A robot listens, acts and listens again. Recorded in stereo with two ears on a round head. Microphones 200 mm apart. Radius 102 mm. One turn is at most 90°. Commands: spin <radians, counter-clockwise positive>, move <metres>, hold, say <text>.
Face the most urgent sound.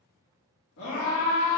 spin 1.57
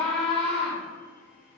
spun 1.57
say Facing the scream, 1 to 2 m away.